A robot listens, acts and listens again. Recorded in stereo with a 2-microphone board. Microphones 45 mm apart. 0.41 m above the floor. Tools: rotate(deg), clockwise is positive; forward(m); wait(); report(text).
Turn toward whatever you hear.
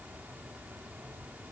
wait()
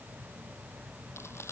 rotate(-90)
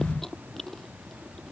report("Facing the chewing.")